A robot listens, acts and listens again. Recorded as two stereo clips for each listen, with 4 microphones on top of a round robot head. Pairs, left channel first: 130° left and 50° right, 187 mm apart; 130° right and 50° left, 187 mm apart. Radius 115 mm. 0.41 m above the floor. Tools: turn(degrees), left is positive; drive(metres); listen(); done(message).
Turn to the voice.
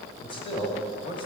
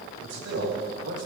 turn(degrees=65)
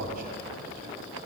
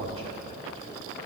done("Facing the man speaking.")